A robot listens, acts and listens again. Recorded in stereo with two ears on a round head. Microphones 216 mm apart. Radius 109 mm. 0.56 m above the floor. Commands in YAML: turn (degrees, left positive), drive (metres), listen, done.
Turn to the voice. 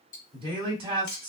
turn: -20
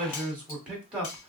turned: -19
done: "Found it: a man speaking, straight ahead, 1 to 2 m away."